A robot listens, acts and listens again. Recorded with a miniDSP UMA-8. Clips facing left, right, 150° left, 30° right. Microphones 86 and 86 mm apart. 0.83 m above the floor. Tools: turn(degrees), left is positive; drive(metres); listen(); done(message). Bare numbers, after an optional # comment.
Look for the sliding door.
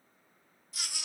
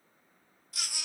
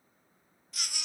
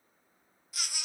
listen()
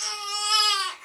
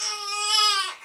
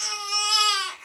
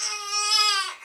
listen()
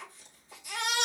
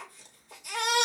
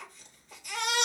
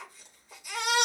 done("I can't make out a sliding door, only a baby crying.")